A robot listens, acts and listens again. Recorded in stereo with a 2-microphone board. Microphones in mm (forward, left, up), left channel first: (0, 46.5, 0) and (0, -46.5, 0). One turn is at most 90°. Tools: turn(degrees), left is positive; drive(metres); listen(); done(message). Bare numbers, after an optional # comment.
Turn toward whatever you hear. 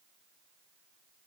listen()
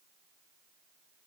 listen()
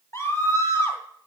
# The scream: about 30° left or 150° left.
turn(30)
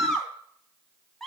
done("Found it: a scream, straight ahead, 2 to 4 m away.")